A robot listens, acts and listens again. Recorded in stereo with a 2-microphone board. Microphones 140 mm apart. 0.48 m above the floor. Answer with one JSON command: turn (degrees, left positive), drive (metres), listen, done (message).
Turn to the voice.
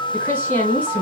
{"turn": 30}
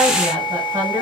{"turn": -20}
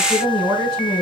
{"done": "Found it: a woman speaking, straight ahead."}